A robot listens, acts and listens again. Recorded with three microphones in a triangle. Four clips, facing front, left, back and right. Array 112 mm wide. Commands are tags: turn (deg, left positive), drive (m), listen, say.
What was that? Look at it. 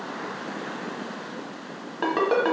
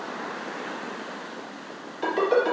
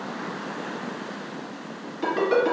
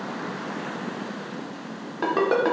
<turn deg="-40"/>
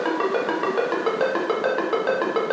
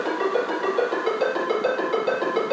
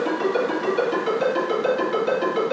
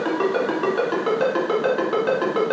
<turn deg="-20"/>
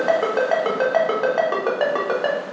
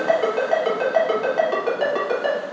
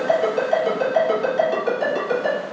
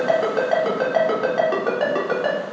<say>Found it: a ringtone, straight ahead.</say>